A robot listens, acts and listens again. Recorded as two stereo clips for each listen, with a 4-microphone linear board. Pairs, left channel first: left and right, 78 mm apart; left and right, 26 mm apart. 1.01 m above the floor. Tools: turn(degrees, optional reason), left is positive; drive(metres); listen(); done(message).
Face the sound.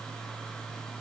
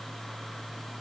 listen()
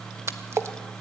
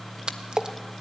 turn(degrees=-35, reason="The splash: about 35° right or 145° right.")
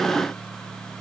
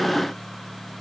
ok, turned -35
listen()
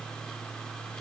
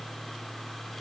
done("I heard a splash, but can't make it out now. It was about straight ahead or 110° right.")